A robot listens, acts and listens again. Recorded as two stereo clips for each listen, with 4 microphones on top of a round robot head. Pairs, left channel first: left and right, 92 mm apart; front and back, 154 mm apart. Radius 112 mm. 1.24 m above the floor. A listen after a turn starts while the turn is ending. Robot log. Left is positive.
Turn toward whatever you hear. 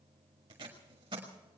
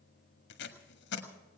note: The tape being pulled: 30° right.
cmd yaw -30
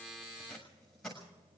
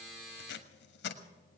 end: Facing the tape being pulled, 1 to 2 m away.